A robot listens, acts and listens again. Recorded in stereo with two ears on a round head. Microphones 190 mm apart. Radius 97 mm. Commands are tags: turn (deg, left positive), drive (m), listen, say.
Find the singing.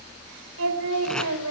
<turn deg="-90"/>
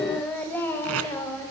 <turn deg="15"/>
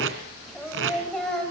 <say>Found it: singing, straight ahead, over 4 m away.</say>